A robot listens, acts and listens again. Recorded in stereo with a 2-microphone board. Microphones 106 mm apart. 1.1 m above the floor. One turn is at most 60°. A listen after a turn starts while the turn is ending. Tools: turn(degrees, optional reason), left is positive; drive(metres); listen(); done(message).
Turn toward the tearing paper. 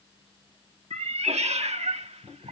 listen()
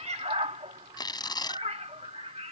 turn(degrees=40, reason="The tearing paper: about 40° left or 140° left.")
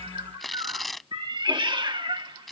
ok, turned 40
done("Facing the tearing paper.")